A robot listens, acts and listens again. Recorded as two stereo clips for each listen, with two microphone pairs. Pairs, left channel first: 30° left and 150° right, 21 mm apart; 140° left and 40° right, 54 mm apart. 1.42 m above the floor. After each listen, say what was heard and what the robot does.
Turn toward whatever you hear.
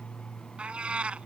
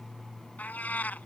The cat meowing: 155° right. Turn 155° right.
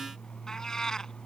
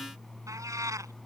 The cat meowing is now 25° right. Turn 25° right.
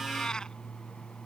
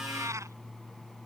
The cat meowing is now 15° right. Turn 15° right.
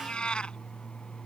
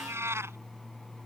Found it: a cat meowing, straight ahead.